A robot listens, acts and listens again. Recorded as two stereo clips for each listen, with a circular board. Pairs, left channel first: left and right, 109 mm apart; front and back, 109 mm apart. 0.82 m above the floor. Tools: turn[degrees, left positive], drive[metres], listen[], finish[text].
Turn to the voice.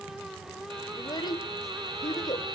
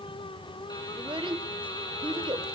Thought: The child speaking: 140° left.
Action: turn[140]
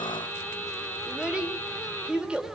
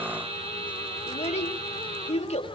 Thought: The child speaking is now 10° right.
Action: turn[-10]
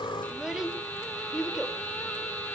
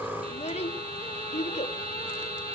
Action: finish[Facing the child speaking, 2 to 4 m away.]